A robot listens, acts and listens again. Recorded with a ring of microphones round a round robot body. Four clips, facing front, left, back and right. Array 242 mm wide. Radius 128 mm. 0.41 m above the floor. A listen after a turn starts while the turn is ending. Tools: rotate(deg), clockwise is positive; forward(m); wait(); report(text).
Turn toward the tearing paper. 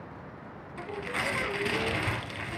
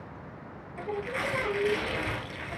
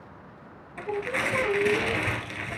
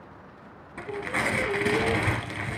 rotate(100)
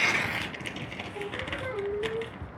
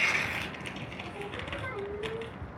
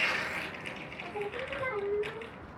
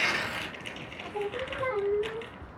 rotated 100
report("Facing the tearing paper, 2 to 4 m away.")